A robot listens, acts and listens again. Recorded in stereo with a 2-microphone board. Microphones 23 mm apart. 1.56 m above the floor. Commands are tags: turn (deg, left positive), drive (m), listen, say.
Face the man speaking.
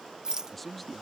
<turn deg="30"/>
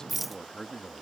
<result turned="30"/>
<turn deg="150"/>
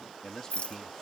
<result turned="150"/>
<turn deg="30"/>
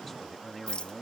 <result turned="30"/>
<turn deg="15"/>
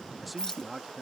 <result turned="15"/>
<say>Found it: a man speaking, straight ahead.</say>